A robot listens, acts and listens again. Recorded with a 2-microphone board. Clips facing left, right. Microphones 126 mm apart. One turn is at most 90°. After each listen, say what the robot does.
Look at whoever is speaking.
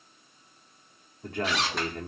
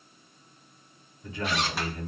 Turn 55° left.
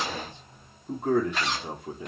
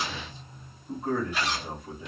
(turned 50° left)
Turn 70° left.
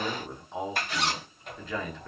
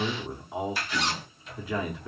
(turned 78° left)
Turn 10° right.
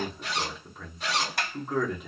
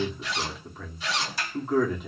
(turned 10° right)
Found it: a man speaking, straight ahead, under 1 m away.